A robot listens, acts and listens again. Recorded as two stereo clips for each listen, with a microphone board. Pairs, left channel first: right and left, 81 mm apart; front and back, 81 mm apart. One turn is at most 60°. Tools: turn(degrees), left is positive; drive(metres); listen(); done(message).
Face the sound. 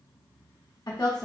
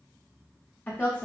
turn(degrees=-60)
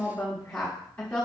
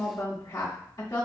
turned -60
turn(degrees=-20)
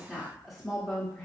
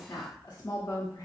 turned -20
done("Facing the woman speaking.")